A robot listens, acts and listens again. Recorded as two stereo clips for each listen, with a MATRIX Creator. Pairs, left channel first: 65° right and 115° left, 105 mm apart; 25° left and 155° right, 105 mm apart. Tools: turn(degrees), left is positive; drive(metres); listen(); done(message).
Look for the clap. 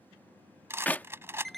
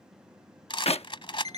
done("Facing the clap.")